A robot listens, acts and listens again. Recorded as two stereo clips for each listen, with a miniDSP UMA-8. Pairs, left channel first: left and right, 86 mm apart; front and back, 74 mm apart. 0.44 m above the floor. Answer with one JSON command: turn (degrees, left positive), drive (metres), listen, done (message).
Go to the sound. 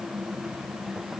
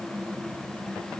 {"listen": true}
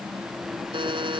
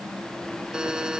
{"turn": -100}
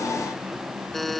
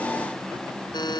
{"drive": 1.0}
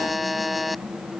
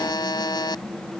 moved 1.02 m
{"drive": 1.0}
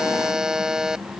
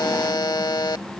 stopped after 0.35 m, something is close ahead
{"done": "Arrived at the buzzer, straight ahead."}